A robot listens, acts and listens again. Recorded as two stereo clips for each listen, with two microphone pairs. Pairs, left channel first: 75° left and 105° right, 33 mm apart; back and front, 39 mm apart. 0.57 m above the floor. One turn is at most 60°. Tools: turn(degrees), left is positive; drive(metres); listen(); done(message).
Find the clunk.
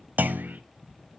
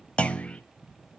turn(degrees=-60)
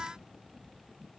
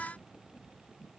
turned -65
turn(degrees=-55)
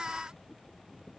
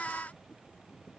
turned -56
done("Facing where the clunk came from. I can't hear it now.")